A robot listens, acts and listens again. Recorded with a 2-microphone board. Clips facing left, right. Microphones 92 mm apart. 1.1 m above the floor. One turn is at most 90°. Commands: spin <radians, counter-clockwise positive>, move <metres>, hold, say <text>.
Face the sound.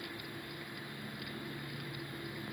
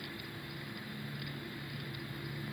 hold
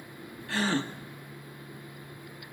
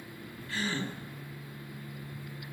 spin 1.57
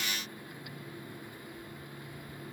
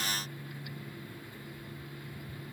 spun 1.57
say I heard a gasp from this way, but can't make it out now.